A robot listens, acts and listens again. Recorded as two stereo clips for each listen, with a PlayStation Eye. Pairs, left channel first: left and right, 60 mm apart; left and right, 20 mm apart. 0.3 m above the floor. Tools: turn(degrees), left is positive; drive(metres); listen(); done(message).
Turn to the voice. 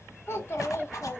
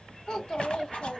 turn(degrees=45)
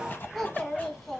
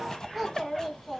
done("Found it: a child speaking, straight ahead, 2 to 4 m away.")